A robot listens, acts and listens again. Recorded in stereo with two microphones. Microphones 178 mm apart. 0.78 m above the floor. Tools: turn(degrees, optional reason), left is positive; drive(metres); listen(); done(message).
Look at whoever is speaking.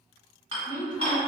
turn(degrees=50, reason="The woman speaking: about 50° left or 130° left.")
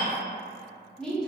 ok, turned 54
done("Facing the woman speaking.")